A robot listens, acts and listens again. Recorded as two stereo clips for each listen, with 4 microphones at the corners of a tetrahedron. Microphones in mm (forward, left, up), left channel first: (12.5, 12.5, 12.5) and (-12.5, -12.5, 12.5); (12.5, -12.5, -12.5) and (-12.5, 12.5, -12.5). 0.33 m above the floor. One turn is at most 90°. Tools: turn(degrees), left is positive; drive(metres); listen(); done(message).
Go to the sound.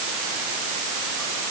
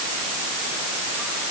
listen()
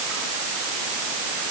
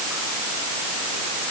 listen()
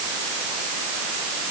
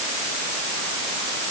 done("I can't make out anything.")